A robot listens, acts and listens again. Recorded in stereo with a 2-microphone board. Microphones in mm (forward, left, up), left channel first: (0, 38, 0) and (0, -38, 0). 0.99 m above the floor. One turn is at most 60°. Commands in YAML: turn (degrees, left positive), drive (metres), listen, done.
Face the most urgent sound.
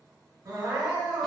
turn: -60
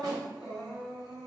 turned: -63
done: "Found it: crying, straight ahead."